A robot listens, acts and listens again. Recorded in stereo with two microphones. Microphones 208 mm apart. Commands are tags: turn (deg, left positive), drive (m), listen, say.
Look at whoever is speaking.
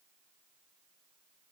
<listen/>
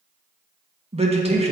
<turn deg="-30"/>
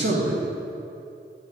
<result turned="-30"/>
<turn deg="-120"/>
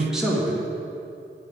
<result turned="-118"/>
<say>Found it: a man speaking, straight ahead, 1 to 2 m away.</say>